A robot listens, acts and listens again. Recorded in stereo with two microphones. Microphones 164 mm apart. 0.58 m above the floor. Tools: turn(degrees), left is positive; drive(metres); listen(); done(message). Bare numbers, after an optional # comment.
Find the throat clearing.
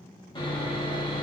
listen()
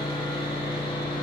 listen()
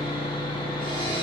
done("I can't make out throat clearing to turn to.")